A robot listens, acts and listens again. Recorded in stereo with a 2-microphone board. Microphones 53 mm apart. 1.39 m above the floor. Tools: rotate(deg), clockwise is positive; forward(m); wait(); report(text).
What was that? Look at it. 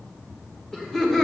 rotate(-30)
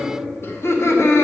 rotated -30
rotate(-120)
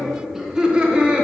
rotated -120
rotate(20)
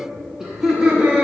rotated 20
rotate(15)
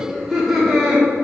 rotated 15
rotate(10)
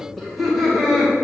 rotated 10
report("Facing the laughter, 1 to 2 m away.")